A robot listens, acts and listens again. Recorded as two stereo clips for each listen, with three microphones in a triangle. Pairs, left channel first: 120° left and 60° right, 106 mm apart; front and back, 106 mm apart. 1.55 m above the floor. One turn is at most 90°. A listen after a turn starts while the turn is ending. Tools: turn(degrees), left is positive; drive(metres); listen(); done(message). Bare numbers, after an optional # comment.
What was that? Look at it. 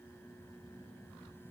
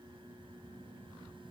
listen()
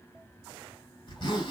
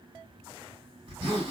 # The zipper: 150° left.
turn(90)
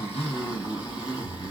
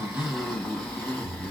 # The zipper is now 75° left.
turn(75)
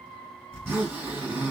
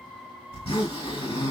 done("Facing the zipper, 2 to 4 m away.")